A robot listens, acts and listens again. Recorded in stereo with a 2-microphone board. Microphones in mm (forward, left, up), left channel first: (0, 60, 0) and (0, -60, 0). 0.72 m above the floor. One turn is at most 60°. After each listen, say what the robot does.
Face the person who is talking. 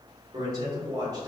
Turn 30° right.
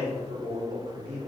Turn 60° right.
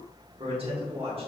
Turn 60° right.
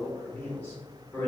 Turn 15° left.
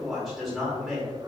Facing the man speaking.